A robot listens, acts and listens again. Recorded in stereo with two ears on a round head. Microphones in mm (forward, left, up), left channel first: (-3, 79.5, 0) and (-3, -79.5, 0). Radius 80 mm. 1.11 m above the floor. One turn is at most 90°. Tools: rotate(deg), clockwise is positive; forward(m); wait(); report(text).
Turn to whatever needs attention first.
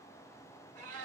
wait()
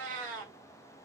wait()
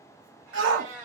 rotate(90)
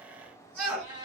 report("Facing the shout, 1 to 2 m away.")